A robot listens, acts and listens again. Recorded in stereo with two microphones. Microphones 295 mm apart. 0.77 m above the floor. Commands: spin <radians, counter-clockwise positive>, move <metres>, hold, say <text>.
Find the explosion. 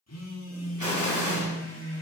spin -1.57
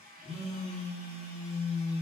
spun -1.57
say Facing where the explosion came from. I can't hear it now.